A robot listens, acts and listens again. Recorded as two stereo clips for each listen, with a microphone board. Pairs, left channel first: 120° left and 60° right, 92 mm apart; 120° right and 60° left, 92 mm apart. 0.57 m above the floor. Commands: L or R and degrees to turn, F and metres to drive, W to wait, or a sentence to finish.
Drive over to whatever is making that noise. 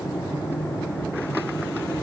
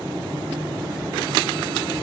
W
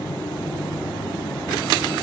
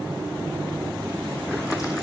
W
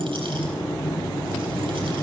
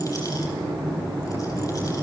I can't make out anything to turn to.